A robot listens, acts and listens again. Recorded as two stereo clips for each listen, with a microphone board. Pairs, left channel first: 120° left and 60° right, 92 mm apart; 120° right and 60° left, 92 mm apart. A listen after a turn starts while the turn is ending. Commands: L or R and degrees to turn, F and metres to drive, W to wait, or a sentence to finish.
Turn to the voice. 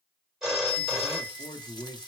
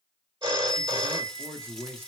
L120
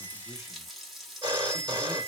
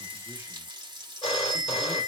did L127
W
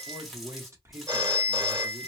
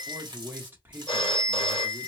Found it: a man speaking, straight ahead, 1 to 2 m away.